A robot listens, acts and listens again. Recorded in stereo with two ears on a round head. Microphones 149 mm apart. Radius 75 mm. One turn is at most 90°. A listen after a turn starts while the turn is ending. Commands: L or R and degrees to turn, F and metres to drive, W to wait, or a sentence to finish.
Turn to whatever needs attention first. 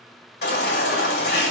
L65
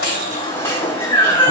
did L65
L20
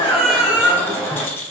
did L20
Facing the baby crying.